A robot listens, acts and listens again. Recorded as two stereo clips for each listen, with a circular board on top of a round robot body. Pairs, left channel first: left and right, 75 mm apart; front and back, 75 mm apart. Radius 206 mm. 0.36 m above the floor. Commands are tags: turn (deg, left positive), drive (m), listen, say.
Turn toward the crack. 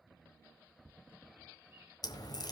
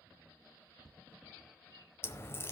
<turn deg="60"/>
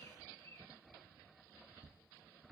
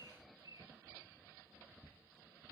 <say>Facing where the crack came from. I can't hear it now.</say>